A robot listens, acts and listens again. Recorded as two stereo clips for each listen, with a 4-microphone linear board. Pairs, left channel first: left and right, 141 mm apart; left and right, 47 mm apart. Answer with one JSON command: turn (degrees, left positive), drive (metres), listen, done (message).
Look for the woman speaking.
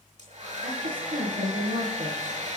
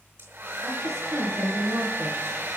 {"turn": -90}
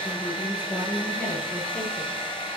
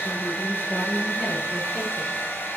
{"turn": 10}
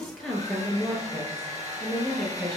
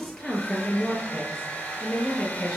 {"done": "Facing the woman speaking, over 4 m away."}